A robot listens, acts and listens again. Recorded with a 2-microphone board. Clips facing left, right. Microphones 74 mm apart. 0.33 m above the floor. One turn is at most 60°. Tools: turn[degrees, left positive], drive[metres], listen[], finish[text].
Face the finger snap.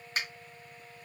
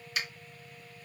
Thought: The finger snap: about 40° left or 140° left.
Action: turn[40]
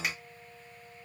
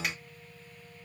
Action: listen[]
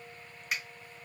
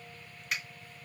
Action: finish[Found it: a finger snap, straight ahead.]